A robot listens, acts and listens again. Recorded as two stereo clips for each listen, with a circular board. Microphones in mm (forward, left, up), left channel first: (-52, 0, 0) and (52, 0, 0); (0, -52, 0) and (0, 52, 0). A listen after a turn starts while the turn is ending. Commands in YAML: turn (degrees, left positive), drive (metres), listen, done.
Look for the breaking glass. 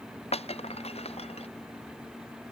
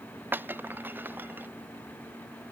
turn: 160
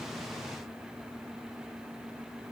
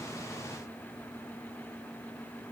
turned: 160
done: "I heard breaking glass from this way, but can't make it out now."